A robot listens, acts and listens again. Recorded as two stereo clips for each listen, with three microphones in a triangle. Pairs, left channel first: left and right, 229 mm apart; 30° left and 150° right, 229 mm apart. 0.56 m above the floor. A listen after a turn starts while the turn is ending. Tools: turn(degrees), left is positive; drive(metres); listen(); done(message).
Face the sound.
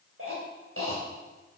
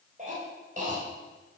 turn(degrees=-95)
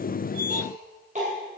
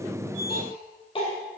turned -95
turn(degrees=-35)
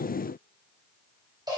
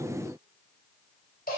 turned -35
turn(degrees=-20)
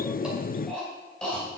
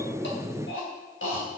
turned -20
done("Found it: a cough, straight ahead.")